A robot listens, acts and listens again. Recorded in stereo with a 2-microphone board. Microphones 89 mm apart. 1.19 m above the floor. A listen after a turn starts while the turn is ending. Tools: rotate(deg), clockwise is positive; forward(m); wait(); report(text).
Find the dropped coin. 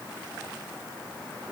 wait()
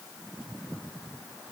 wait()
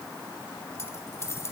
rotate(-30)
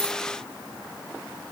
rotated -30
wait()
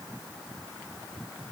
report("I heard a dropped coin, but can't make it out now. It was about straight ahead or 120° left.")